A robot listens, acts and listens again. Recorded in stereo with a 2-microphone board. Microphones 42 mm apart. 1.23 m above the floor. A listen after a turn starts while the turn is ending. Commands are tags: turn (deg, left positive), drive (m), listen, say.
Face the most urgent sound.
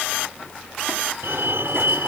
<turn deg="-65"/>
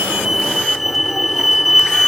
<say>Found it: a fire alarm, straight ahead.</say>